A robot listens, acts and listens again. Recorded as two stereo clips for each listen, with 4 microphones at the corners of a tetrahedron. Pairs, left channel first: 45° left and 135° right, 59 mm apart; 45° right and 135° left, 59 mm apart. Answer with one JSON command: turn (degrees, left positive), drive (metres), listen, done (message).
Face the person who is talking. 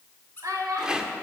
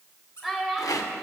{"turn": -130}
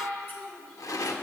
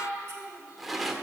{"turn": -25}
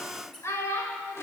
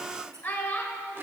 {"turn": 10}
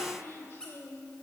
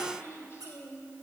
{"done": "Facing the child speaking, 1 to 2 m away."}